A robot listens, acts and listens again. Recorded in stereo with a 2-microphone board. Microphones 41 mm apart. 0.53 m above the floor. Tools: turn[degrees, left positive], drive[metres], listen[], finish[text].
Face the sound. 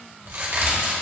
Thought: The crack: about 65° right or 115° right.
Action: turn[-65]
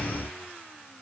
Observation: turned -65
Action: listen[]
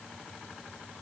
Action: finish[I heard a crack, but can't make it out now. It was about straight ahead or 50° right.]